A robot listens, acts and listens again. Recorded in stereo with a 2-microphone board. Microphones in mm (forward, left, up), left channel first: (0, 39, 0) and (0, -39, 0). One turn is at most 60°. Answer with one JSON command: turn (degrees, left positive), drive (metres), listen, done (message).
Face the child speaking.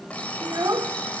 {"turn": -50}
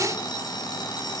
{"listen": true}
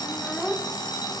{"done": "Found it: a child speaking, straight ahead, 1 to 2 m away."}